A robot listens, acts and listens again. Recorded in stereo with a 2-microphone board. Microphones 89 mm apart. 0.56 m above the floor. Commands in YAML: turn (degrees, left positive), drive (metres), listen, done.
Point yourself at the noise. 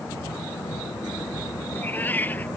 turn: 20
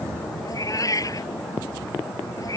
turn: 140
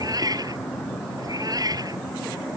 turn: -50
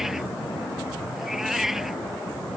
done: "Found it: a cat meowing, straight ahead."